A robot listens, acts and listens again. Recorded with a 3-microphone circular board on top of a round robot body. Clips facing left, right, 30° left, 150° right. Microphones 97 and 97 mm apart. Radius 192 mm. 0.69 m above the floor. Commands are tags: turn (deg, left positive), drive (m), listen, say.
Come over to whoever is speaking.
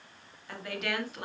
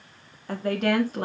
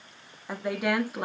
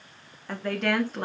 <turn deg="-50"/>
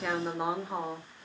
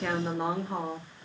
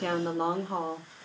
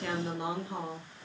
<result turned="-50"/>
<drive m="1.0"/>
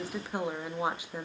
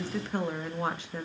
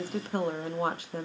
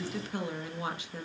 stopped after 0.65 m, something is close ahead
<turn deg="15"/>
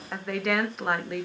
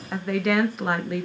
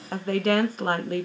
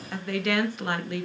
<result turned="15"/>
<say>I am next to the woman speaking.</say>